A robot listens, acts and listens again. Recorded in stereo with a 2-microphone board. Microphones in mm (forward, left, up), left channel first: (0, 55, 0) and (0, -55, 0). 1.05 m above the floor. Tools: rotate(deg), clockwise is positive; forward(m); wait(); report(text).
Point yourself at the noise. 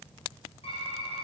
rotate(-65)
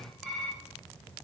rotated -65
report("Facing the typing on a keyboard.")